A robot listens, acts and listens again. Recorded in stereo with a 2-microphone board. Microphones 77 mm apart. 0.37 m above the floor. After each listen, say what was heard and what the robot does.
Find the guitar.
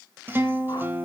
The guitar: about 30° right or 150° right. Turn 30° right.
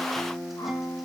Found it: a guitar, straight ahead, under 1 m away.